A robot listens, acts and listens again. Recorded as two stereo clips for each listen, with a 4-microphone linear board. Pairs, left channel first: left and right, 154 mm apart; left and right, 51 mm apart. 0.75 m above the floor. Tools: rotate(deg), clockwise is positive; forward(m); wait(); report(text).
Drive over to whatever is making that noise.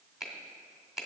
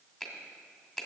rotate(-30)
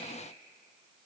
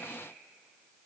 wait()
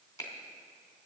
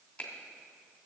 rotate(-155)
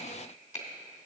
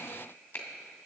rotate(-50)
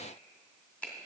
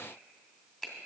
rotate(-10)
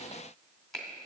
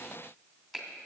forward(1.0)
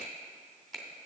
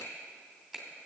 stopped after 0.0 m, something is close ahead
report("Blocked. The finger snap is further on, straight ahead.")